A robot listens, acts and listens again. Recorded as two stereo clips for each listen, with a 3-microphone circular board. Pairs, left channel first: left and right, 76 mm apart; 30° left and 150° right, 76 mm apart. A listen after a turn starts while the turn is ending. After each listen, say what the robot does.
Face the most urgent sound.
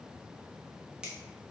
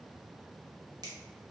Keep listening.
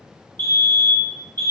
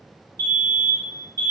Turn 110° right.
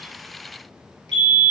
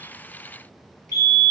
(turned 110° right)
Found it: a fire alarm, straight ahead.